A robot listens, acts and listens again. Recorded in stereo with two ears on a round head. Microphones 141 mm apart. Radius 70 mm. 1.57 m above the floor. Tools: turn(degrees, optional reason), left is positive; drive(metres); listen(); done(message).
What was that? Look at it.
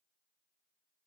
listen()
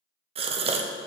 turn(degrees=-35, reason="The gasp: about 35° right or 145° right.")
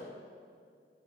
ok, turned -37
listen()
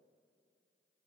done("I heard a gasp, but can't make it out now. It was about straight ahead or 105° right.")